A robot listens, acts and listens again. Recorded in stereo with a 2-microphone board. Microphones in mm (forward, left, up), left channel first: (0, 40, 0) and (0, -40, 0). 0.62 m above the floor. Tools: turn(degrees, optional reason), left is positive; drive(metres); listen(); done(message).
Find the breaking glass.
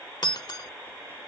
turn(degrees=65, reason="The breaking glass: about 65° left or 115° left.")
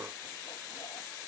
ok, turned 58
listen()
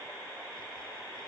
done("I heard breaking glass, but can't make it out now. It was about 5° left or 55° left.")